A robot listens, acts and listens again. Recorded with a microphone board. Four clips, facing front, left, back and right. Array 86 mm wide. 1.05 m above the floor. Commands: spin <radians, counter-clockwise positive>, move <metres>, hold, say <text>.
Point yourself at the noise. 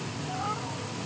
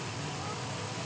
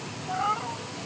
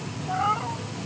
spin -2.01
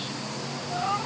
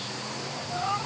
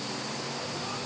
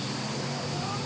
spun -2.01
spin 0.61
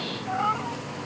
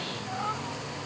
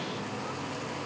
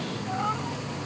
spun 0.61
spin -0.17
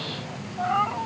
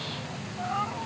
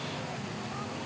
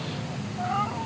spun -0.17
say Facing the cat meowing.